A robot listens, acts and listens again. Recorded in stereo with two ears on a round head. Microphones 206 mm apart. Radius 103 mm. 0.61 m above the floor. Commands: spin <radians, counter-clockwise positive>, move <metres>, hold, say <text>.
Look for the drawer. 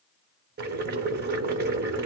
hold
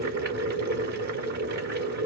hold
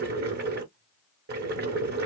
say I can't make out a drawer to turn to.